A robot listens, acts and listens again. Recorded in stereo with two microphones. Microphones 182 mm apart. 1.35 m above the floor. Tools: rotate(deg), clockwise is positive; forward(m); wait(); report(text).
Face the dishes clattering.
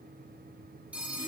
wait()
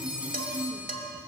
rotate(50)
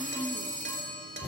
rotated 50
rotate(80)
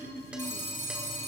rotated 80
wait()
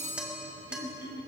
report("Found it: dishes clattering, straight ahead, 2 to 4 m away.")